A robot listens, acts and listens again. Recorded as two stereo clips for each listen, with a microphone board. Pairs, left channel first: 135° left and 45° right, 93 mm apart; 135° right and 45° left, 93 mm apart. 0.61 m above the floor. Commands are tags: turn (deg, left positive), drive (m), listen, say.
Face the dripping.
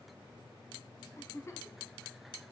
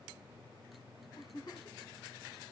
<listen/>
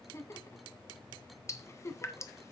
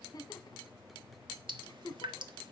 <turn deg="80"/>
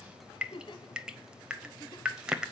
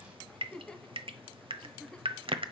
<turn deg="35"/>
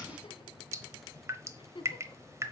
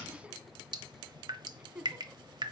<turn deg="10"/>
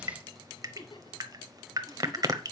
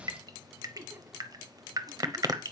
<say>Facing the dripping.</say>